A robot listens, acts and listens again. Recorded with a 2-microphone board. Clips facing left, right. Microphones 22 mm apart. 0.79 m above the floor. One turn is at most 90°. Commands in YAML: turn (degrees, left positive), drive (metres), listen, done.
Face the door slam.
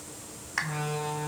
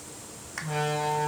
turn: -70
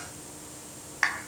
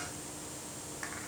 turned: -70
listen: true
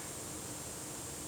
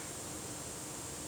done: "I heard a door slam, but can't make it out now. It was about straight ahead or 40° right."